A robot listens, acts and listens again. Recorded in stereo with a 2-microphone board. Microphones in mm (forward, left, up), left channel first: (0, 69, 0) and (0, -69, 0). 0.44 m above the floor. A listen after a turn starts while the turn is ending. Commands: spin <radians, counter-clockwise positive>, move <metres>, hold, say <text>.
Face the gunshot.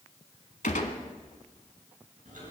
spin 1.22
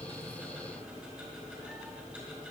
hold
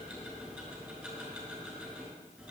say I heard a gunshot, but can't make it out now. It was about straight ahead or 40° left.